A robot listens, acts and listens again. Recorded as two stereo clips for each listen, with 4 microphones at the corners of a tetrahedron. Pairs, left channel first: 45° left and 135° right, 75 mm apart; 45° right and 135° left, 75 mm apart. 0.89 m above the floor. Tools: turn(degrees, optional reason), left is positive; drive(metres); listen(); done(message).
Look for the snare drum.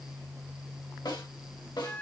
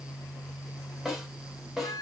turn(degrees=50, reason="The snare drum: 50° left.")
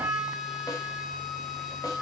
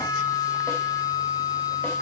listen()
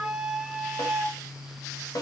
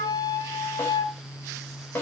turn(degrees=15, reason="The snare drum is now 15° left.")
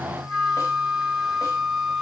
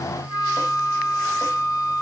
listen()
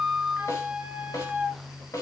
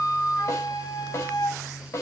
done("Found it: a snare drum, straight ahead.")